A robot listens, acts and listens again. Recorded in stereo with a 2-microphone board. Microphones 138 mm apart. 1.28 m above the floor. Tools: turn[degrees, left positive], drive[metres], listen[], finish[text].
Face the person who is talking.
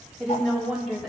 Action: turn[-30]
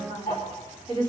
Thought: So it is at 140° right.
Action: turn[-140]
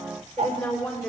Action: finish[Facing the woman speaking.]